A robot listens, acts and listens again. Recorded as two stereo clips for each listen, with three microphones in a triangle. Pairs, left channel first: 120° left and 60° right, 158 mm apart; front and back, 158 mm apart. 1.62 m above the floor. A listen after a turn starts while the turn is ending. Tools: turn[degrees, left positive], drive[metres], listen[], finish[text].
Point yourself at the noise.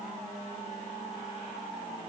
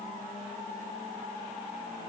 Action: listen[]
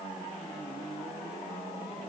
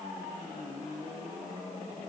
Action: listen[]
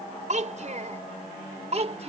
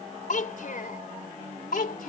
Thought: The child speaking: 15° right.
Action: turn[-15]
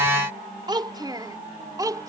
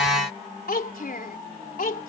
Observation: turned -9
Action: finish[Facing the child speaking.]